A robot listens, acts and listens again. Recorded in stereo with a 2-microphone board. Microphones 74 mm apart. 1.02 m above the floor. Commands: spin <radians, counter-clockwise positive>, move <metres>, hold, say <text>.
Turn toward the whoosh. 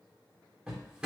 hold
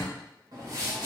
spin -0.87
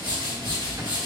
spin -1.40
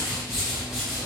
say Facing the whoosh.